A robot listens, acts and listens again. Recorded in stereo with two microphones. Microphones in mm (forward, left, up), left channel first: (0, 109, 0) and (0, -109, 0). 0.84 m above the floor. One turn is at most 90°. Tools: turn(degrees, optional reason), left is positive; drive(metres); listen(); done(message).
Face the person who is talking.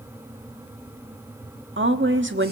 turn(degrees=-60, reason="The woman speaking: about 60° right or 120° right.")
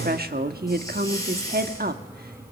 turn(degrees=-50, reason="So it is at 50° right.")
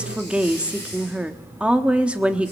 done("Facing the woman speaking, 1 to 2 m away.")